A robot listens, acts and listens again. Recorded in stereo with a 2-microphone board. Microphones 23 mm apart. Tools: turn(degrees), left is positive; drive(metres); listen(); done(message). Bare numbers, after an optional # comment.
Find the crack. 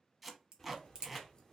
# The crack: about 45° right or 135° right.
turn(-45)
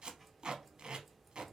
listen()
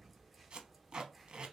done("I heard a crack, but can't make it out now. It was about straight ahead or 90° right.")